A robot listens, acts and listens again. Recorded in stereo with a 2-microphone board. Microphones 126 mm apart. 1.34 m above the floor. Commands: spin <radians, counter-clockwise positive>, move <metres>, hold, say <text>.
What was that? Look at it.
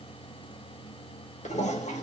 spin 1.22
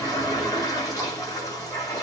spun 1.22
spin 0.52
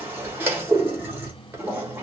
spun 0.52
spin -0.35
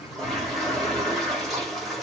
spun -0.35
say Facing the toilet flushing.